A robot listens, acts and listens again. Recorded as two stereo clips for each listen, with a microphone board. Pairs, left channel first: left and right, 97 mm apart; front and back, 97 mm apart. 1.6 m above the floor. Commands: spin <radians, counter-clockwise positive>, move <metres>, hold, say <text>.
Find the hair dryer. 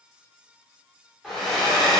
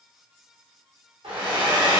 spin 3.14
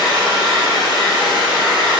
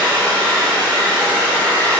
spin 1.13
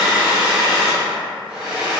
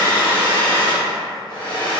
say Facing the hair dryer.